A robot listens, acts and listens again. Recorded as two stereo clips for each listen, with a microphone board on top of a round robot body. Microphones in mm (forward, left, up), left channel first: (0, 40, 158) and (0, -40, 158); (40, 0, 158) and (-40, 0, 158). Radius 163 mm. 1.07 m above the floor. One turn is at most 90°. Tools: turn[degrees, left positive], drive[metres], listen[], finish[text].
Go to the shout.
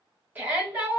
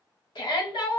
Thought: The shout: 20° right.
Action: turn[-20]
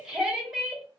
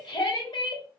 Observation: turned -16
Action: drive[1.0]
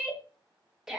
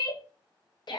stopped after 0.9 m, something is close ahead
Action: finish[I am next to the shout.]